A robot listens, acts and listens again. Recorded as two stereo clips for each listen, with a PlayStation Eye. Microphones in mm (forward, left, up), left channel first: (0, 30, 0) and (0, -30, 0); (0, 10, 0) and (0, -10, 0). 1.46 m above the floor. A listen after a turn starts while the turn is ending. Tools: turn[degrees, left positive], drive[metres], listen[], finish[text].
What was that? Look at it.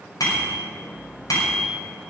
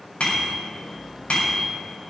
Action: turn[90]
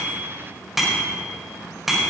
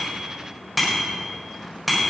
Action: finish[Facing the bicycle bell, over 4 m away.]